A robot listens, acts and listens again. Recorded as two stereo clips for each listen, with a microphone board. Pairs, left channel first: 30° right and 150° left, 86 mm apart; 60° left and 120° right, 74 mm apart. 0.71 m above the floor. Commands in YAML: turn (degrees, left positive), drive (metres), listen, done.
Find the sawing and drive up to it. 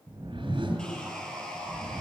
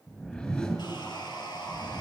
turn: 50
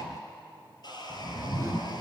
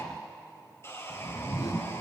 drive: 1.0
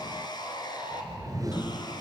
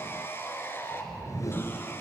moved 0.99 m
drive: 1.0
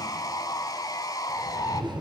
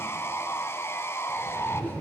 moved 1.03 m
turn: 10
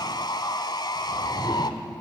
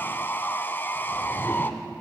drive: 1.0
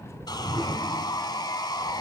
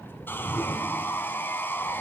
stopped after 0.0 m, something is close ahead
done: "I am next to the sawing."